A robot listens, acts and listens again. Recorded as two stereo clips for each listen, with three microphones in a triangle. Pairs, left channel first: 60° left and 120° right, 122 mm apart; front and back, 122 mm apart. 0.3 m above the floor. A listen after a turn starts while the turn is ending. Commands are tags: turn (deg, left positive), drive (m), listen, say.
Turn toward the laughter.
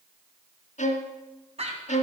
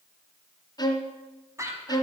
<turn deg="-120"/>
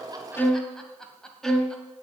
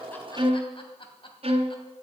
<turn deg="-25"/>
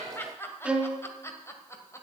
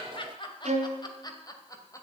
<turn deg="25"/>
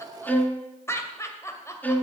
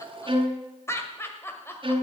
<turn deg="40"/>
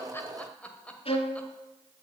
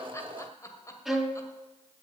<say>Facing the laughter.</say>